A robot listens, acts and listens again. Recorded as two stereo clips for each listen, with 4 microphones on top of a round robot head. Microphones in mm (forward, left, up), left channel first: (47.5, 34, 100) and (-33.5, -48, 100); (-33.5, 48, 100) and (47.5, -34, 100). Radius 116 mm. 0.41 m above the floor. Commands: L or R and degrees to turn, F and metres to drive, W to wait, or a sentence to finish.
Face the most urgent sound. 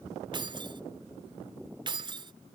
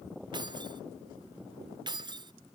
W
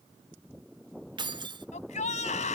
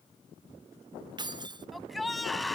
L45
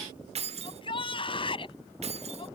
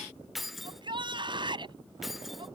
Facing the shout.